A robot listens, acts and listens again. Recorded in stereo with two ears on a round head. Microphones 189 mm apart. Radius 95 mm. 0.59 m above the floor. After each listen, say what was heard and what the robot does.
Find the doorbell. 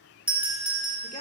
Turn 30° right.
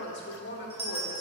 So it is at 140° right. Turn 140° right.
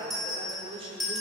Found it: a doorbell, straight ahead.